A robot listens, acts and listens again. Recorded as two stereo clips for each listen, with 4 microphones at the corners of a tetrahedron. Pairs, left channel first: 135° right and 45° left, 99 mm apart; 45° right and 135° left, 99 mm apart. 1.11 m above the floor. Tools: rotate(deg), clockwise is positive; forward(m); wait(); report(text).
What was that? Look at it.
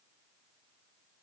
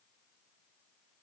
wait()
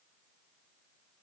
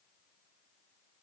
wait()
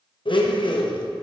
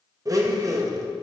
rotate(170)
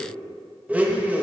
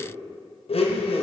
rotate(30)
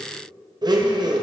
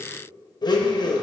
report("Facing the blender.")